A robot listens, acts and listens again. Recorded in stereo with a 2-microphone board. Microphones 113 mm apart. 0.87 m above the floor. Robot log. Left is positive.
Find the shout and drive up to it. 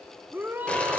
note: The shout: about 20° right or 160° right.
cmd yaw -20
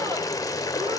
cmd idle
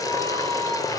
note: So it is at 140° right.
cmd yaw -140
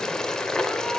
cmd idle
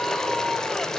cmd idle
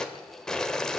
end: Facing where the shout came from. I can't hear it now. I did not reach it.